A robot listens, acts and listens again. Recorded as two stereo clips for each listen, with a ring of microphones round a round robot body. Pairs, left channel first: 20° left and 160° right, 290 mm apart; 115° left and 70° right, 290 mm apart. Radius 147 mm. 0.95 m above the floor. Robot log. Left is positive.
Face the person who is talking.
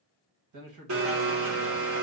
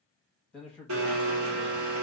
note: The man speaking: 160° right.
cmd yaw -160
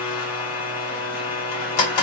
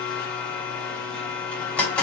cmd idle
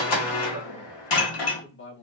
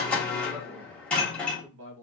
note: The man speaking is now 25° right.
cmd yaw -25
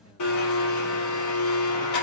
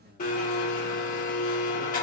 cmd idle
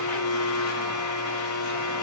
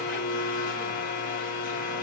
cmd idle
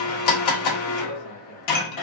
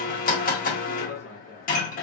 end: I heard a man speaking from this way, but can't make it out now.